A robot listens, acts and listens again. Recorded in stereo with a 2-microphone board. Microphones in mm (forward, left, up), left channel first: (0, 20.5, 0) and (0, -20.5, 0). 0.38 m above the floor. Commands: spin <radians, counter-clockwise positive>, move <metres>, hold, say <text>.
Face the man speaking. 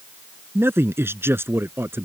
spin -1.57
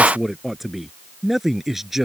say Facing the man speaking.